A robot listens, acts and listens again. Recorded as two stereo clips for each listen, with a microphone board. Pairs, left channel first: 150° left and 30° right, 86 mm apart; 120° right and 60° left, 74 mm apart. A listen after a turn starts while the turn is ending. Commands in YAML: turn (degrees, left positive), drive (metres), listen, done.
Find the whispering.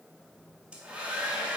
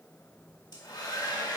listen: true
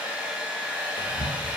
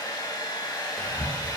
turn: 170
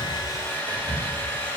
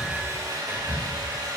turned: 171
done: "Found it: whispering, straight ahead, 1 to 2 m away."